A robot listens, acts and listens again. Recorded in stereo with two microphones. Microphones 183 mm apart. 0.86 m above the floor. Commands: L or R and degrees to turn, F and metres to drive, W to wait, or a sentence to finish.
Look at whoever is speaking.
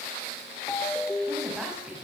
R30
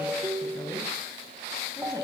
W
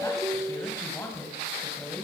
L10
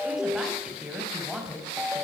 Facing the woman speaking.